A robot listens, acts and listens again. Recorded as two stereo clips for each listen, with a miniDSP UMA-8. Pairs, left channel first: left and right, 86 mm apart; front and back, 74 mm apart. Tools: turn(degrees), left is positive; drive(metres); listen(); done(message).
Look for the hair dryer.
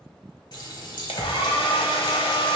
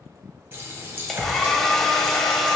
turn(degrees=85)
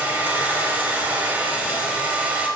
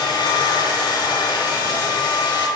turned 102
turn(degrees=-15)
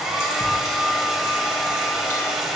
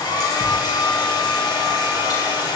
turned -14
done("Facing the hair dryer, under 1 m away.")